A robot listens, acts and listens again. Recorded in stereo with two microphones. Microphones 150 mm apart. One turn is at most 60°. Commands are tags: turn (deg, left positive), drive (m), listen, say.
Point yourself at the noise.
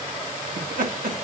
<turn deg="-60"/>
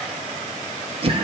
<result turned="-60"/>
<turn deg="-40"/>
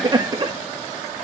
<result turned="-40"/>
<turn deg="-30"/>
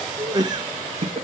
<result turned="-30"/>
<turn deg="-40"/>
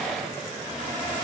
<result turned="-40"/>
<listen/>
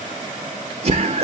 <turn deg="-45"/>
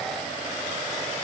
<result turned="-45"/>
<listen/>
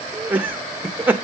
<turn deg="-10"/>
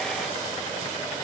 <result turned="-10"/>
<listen/>
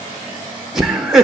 <say>Found it: laughter, straight ahead, 1 to 2 m away.</say>